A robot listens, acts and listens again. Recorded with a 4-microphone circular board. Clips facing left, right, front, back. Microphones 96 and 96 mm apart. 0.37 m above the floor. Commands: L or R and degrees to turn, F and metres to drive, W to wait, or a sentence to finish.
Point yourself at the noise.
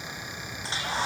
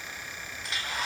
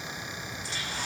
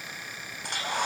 L150
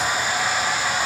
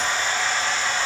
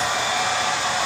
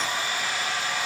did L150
L10
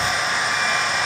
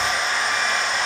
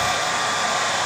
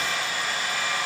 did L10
Facing the hair dryer, over 4 m away.